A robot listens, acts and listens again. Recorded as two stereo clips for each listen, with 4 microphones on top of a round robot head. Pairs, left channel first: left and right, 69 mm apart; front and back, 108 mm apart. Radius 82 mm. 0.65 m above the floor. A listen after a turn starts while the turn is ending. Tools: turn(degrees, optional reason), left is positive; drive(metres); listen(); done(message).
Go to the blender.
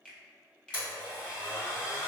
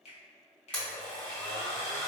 turn(degrees=85, reason="The blender: 85° left.")
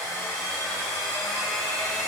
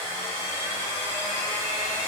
drive(metres=1.0)
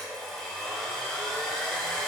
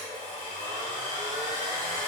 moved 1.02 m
drive(metres=1.0)
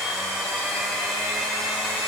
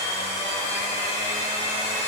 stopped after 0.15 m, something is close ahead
done("Arrived at the blender, straight ahead.")